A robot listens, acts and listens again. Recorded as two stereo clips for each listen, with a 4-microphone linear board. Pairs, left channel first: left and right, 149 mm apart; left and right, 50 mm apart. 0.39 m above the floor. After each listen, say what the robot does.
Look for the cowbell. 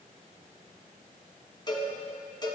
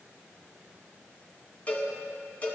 Turn 30° left.
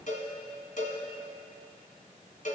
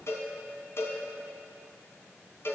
Turn 115° left.
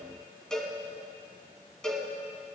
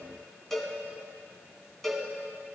Facing the cowbell.